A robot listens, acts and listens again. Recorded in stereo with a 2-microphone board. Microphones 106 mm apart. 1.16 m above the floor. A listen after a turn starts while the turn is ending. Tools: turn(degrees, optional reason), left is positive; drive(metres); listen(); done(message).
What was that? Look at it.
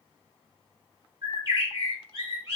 turn(degrees=-35, reason="The bird: about 35° right or 145° right.")
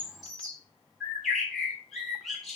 done("Found it: a bird, straight ahead.")